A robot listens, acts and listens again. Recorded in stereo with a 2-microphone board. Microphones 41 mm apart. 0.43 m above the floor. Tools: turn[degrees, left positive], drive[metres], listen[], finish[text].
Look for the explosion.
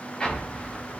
Thought: The explosion: about 20° left or 160° left.
Action: turn[20]
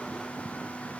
Action: listen[]
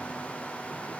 Action: finish[I heard an explosion, but can't make it out now. It was about straight ahead or 140° left.]